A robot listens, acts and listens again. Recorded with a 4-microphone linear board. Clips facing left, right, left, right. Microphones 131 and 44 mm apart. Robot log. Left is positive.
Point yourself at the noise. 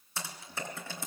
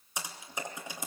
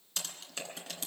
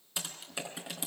cmd yaw -30
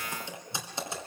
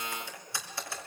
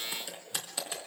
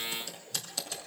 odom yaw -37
note: So it is at 20° left.
cmd yaw +20
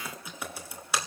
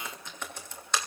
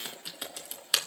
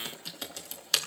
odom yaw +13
note: The typing on a keyboard is now 10° left.
cmd yaw +10
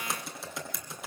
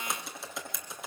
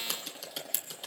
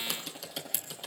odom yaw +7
end: Facing the typing on a keyboard, 2 to 4 m away.